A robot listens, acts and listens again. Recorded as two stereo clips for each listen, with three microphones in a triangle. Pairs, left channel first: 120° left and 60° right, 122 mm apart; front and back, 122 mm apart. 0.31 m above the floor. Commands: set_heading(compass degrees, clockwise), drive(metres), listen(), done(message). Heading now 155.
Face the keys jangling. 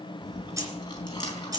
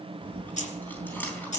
done("Facing the keys jangling.")